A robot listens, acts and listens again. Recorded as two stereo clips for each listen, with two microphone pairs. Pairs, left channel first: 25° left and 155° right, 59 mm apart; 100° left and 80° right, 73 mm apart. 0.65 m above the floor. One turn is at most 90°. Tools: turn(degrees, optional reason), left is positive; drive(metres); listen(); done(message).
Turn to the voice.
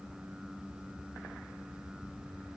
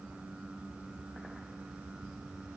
listen()
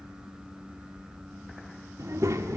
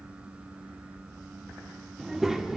turn(degrees=-90, reason="The child speaking: 165° right.")
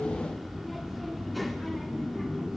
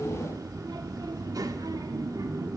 turn(degrees=-65, reason="The child speaking is now 65° right.")
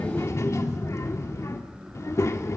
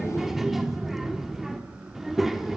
done("Found it: a child speaking, straight ahead.")